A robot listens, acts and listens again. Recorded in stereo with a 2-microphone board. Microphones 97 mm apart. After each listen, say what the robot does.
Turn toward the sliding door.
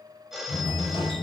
Turn 60° left.
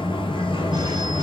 Turn 65° left.
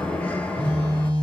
Turn 15° left.
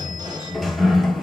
Facing the sliding door.